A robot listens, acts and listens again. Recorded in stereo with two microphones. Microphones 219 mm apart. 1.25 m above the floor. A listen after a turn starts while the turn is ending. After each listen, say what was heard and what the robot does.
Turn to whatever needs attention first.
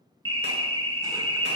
Turn 90° right.
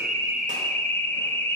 So it is at 10° left. Turn 10° left.
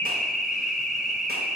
Facing the alarm, under 1 m away.